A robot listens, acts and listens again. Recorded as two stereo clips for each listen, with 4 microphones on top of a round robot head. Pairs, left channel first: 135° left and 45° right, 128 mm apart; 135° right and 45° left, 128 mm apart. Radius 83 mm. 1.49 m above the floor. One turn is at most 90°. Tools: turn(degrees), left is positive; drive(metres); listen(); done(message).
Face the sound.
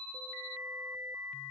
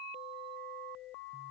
listen()
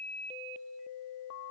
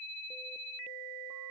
listen()
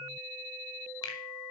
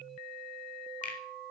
turn(degrees=-90)
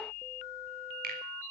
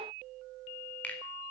turn(degrees=-55)
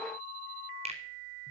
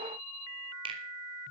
done("Facing the finger snap, 2 to 4 m away.")